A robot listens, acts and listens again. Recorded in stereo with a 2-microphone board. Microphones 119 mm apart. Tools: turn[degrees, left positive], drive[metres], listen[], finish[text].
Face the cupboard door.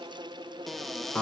Action: turn[30]
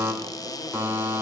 Thought: So it is at 145° left.
Action: turn[145]
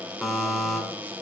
Thought: The cupboard door is now 15° right.
Action: turn[-15]
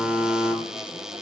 Action: finish[Found it: a cupboard door, straight ahead, under 1 m away.]